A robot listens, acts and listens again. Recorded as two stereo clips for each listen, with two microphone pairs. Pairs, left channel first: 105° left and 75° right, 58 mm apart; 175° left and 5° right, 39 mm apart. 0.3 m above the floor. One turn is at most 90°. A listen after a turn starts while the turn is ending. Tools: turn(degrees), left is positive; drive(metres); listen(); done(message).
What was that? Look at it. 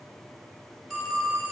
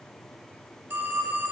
turn(degrees=15)
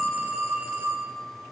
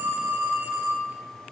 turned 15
done("Found it: a phone ringing, straight ahead.")